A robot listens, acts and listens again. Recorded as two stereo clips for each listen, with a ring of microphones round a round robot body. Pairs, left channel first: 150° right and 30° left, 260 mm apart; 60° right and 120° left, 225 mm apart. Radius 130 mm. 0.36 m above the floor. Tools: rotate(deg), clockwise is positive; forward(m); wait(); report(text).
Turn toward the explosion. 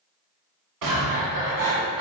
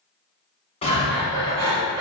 report("Found it: an explosion, straight ahead.")